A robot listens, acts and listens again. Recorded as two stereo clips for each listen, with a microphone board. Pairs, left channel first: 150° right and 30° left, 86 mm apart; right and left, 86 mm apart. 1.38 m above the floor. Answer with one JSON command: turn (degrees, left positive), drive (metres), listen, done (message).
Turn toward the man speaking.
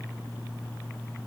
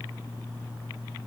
{"listen": true}
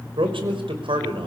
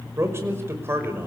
{"turn": 25}
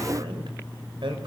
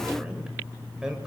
{"listen": true}
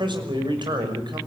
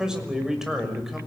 {"done": "Facing the man speaking."}